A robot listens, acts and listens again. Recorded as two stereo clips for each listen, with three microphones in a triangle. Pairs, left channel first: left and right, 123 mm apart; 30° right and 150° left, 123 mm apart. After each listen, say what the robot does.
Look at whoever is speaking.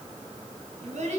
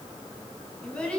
Turn 110° right.
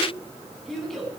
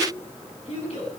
Found it: a child speaking, straight ahead.